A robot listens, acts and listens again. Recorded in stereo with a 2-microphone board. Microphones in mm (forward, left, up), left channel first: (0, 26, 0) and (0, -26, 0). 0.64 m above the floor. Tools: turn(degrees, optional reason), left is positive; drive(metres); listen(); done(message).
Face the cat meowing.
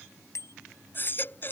listen()
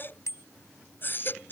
listen()
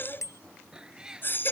turn(degrees=-30)
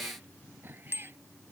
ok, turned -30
listen()
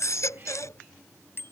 listen()
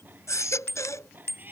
turn(degrees=-145, reason="So it is at 145° right.")
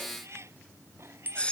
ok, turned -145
turn(degrees=-60, reason="The cat meowing is now 60° right.")
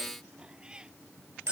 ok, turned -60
turn(degrees=-15, reason="The cat meowing is now 15° right.")
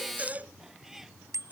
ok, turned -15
done("Facing the cat meowing.")